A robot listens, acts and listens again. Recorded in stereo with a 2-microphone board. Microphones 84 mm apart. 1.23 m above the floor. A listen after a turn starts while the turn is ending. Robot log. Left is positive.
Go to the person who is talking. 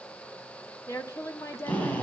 note: The woman speaking: about 35° left or 145° left.
cmd yaw +35
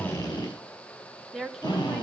cmd fwd 1.0
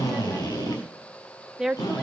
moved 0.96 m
cmd fwd 1.0
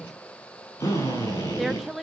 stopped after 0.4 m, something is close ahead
end: I am next to the woman speaking.